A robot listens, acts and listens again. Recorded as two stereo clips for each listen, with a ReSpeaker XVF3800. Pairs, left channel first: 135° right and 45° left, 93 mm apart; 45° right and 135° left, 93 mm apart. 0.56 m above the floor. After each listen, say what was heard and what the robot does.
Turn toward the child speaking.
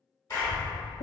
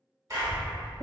The child speaking: 90° right. Turn 90° right.
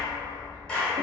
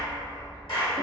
The child speaking is now 10° right. Turn 10° right.
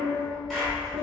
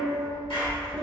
The child speaking is now 25° right. Turn 25° right.
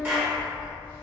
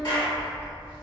The child speaking is now 15° right. Turn 15° right.
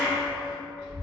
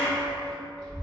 The child speaking is now 10° right. Turn 10° right.
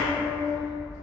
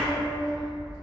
Facing the child speaking.